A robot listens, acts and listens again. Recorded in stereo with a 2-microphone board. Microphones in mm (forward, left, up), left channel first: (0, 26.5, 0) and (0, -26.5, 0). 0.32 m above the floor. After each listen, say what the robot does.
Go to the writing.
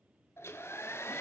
Keep listening.
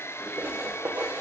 Turn 40° right.
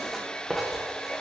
Drive 1.0 m forward.
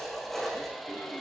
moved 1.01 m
Drive 1.0 m forward.
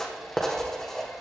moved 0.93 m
Turn 10° left.
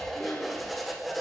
Drive 1.0 m forward.
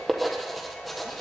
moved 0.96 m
Drive 1.0 m forward.
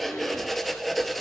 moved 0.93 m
Drive 1.0 m forward.
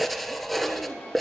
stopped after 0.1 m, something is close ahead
I am next to the writing.